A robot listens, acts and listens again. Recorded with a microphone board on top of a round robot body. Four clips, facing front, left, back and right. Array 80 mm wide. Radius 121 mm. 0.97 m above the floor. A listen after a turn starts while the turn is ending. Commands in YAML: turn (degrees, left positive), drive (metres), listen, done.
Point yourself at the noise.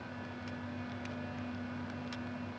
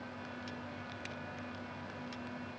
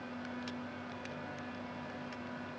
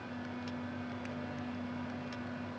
listen: true
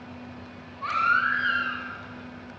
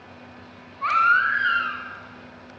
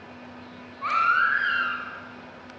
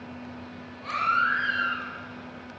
turn: 100
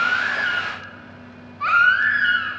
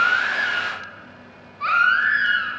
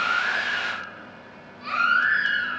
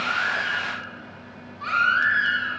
turn: 25
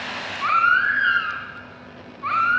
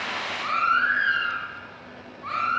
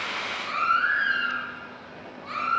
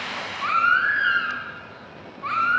turn: -15
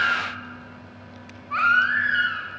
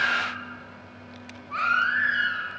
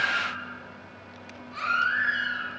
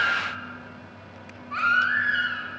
done: "Facing the baby crying."